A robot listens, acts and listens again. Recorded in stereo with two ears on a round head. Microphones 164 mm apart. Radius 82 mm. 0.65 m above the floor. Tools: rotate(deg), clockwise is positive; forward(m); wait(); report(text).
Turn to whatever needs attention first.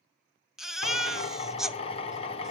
rotate(-30)
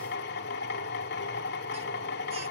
wait()
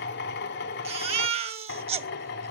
rotate(35)
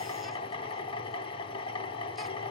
wait()
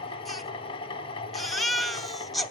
report("Found it: a baby crying, straight ahead.")